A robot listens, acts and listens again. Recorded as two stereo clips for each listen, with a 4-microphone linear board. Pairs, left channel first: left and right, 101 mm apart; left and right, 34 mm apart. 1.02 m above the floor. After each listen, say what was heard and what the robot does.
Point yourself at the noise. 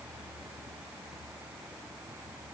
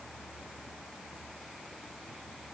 Keep listening.
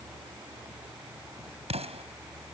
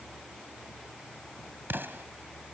Turn 90° right.
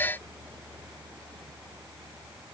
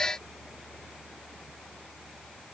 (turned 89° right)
I heard an explosion from this way, but can't make it out now.